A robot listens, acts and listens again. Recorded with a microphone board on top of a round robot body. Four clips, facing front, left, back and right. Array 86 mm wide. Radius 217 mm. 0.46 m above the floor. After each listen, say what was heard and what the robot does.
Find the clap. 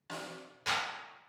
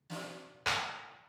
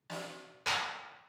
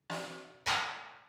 The clap: 95° left. Turn 95° left.
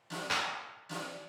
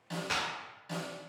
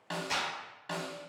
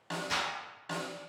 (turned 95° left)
The clap is now 40° left. Turn 40° left.
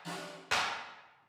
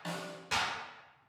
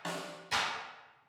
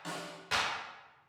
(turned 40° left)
Found it: a clap, straight ahead.